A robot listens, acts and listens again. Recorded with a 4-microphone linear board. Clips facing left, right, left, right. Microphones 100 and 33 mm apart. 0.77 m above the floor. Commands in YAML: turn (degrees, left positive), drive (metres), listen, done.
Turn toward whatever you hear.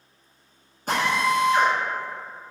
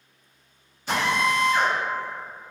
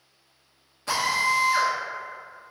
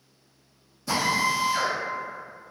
turn: 45
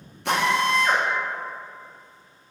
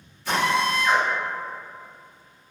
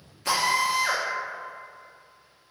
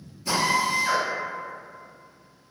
turn: 80
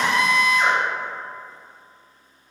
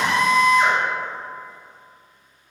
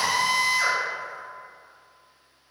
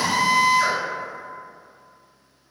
done: "Found it: a drill, straight ahead."